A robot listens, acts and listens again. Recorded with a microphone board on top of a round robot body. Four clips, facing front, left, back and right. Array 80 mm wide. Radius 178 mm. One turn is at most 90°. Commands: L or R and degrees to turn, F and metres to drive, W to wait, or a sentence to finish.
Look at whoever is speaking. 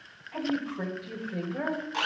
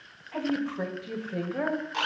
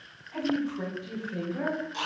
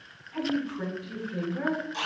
L70
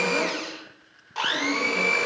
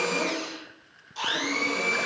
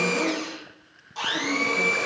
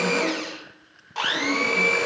W
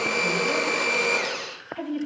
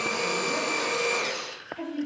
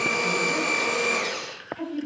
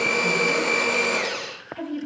R15
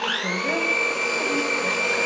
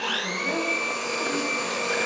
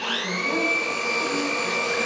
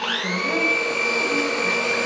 W
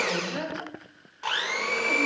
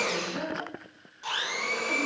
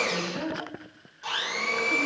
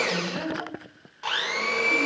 Facing the woman speaking, 2 to 4 m away.